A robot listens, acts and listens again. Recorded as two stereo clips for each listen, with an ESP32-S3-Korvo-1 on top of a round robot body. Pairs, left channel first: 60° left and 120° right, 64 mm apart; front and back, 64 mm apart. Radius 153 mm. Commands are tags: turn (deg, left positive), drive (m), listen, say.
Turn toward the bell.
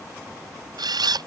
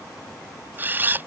<listen/>
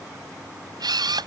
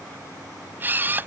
<listen/>
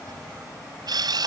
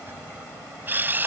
<say>I can't make out a bell, only a camera shutter.</say>